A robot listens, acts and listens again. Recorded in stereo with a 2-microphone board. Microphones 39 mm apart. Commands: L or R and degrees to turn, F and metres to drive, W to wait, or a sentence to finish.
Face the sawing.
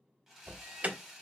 R30
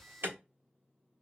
W
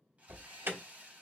R140
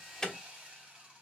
R25
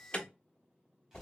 W
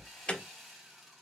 Found it: sawing, straight ahead, 1 to 2 m away.